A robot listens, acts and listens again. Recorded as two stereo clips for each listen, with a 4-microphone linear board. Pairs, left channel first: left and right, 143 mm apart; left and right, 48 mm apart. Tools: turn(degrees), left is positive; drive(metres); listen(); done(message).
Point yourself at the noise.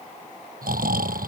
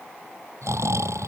turn(degrees=-90)
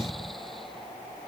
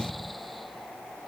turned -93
done("Found it: snoring, straight ahead.")